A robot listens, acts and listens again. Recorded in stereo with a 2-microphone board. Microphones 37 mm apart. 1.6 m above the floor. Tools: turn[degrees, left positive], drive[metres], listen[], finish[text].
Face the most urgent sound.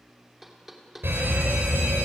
Action: turn[-90]
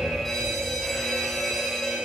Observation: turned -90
Thought: So it is at 10° left.
Action: turn[10]
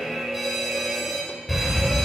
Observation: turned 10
Action: finish[Found it: an alarm, straight ahead.]